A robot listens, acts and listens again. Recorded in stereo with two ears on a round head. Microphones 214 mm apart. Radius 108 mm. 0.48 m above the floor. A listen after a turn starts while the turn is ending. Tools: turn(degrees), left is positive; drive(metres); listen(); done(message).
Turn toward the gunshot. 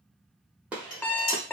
turn(degrees=-30)
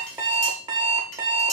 listen()
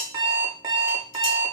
done("I heard a gunshot, but can't make it out now. It was about 25° left or 145° right.")